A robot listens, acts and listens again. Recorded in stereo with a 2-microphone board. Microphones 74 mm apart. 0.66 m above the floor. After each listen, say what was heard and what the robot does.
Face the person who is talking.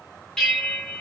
Keep listening.
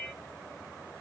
Keep listening.
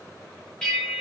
I can't make out anyone speaking to turn to.